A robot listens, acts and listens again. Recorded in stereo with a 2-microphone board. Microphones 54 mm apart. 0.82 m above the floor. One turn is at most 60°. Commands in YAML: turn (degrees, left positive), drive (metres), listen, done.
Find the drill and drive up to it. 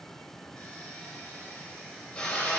turn: 15
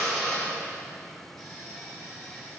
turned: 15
drive: 1.0
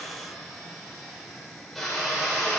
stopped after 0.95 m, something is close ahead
done: "Blocked. The drill is further on, straight ahead."